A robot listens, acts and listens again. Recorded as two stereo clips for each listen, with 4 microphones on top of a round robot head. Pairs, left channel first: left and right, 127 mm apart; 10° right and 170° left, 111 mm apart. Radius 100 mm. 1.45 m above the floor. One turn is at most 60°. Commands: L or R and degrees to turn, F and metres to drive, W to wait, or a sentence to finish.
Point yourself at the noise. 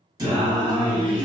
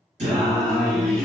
R60
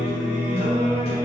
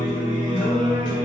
R30
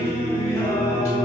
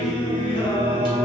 L35
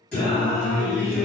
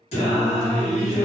L15
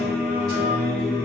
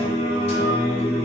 Found it: singing, straight ahead, 1 to 2 m away.